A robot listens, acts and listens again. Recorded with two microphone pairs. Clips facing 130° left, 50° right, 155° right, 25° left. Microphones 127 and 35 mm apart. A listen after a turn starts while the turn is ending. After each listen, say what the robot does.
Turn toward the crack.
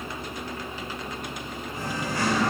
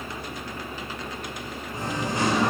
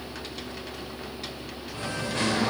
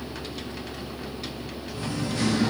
Keep listening.
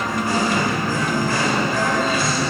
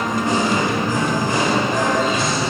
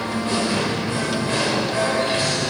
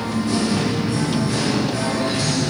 Keep listening.
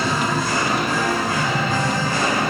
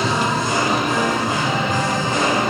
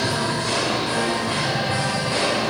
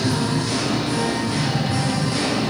I can't make out a crack to turn to.